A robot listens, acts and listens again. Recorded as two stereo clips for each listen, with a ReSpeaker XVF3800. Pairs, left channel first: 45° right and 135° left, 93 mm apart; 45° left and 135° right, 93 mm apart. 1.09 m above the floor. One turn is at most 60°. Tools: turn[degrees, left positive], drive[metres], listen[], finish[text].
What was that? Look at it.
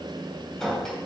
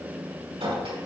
Thought: The clink: 130° right.
Action: turn[-60]
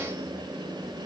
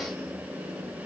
Thought: Nothing new. It was at 70° right.
Action: turn[-60]
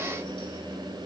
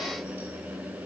Thought: Nothing new. It was at 10° right.
Action: turn[-10]
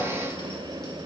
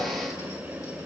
Action: finish[Facing where the clink came from. I can't hear it now.]